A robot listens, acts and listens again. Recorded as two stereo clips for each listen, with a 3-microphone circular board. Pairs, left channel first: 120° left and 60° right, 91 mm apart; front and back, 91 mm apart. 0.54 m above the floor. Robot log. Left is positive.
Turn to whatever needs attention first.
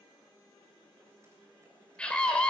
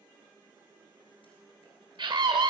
note: The scream: 165° right.
cmd yaw -165
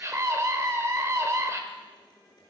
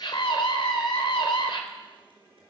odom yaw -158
end: Facing the scream, 1 to 2 m away.